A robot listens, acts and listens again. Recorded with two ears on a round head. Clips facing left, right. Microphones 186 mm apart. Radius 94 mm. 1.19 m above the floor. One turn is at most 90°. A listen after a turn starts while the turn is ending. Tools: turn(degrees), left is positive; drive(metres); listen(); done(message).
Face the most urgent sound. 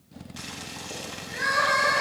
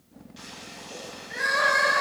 turn(degrees=-20)
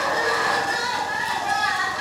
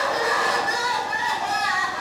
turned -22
turn(degrees=-90)
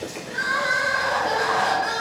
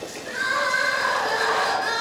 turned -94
turn(degrees=-45)
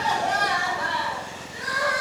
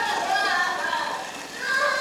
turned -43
done("Found it: crying, straight ahead, 2 to 4 m away.")